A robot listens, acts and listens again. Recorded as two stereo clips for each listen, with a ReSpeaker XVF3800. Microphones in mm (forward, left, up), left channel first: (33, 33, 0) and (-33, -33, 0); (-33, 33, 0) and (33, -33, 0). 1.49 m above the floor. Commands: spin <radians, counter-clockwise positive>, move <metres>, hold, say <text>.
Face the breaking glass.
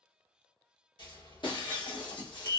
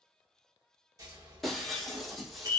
spin 0.79
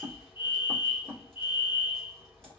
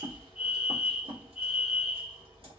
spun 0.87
say I heard breaking glass from this way, but can't make it out now.